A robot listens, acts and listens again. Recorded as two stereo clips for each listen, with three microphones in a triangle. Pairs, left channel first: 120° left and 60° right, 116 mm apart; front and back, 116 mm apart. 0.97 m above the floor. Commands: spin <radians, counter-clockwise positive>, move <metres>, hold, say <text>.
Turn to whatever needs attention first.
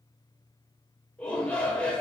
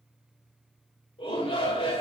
spin 0.70
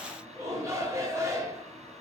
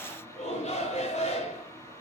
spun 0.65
say Found it: a shout, straight ahead, 2 to 4 m away.